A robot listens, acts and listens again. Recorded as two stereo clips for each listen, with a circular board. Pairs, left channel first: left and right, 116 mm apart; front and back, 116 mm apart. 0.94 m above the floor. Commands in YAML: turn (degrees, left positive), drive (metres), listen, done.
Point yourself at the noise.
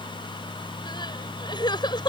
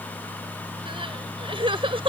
turn: 140
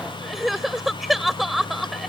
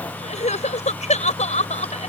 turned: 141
done: "Found it: crying, straight ahead."